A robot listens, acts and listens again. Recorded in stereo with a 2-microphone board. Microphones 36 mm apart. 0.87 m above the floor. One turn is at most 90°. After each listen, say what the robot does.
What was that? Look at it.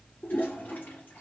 Turn 60° left.
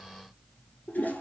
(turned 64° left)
Turn 60° left.
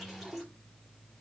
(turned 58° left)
Found it: a toilet flushing, straight ahead, over 4 m away.